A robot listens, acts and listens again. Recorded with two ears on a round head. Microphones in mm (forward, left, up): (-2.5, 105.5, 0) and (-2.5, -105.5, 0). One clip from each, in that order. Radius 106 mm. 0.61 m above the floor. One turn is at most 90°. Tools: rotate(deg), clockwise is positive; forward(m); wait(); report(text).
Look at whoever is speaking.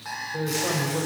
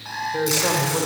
rotate(70)
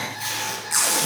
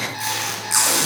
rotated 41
wait()
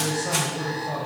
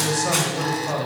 rotate(50)
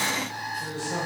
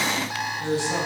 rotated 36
rotate(20)
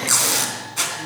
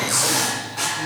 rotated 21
wait()
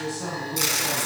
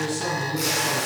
report("Facing the man speaking.")